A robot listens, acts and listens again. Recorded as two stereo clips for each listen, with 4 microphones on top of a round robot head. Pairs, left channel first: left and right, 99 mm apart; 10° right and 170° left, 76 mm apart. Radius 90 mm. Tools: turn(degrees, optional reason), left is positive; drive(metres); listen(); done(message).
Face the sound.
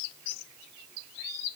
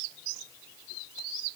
listen()
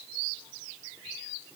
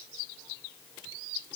listen()
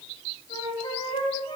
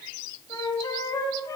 turn(degrees=40, reason="The flute: 40° left.")
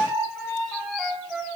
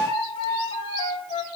done("Facing the flute, 1 to 2 m away.")